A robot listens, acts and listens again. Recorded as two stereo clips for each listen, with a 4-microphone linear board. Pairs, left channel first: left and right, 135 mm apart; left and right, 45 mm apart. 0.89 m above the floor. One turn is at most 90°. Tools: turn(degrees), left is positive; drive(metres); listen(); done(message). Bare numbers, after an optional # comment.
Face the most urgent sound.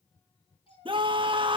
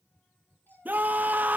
# The scream: about 40° right or 140° right.
turn(-40)
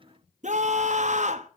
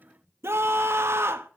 # So it is at 95° right.
turn(-90)
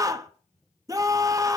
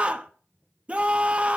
# The scream is now 30° right.
turn(-30)
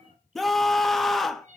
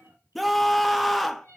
done("Found it: a scream, straight ahead, under 1 m away.")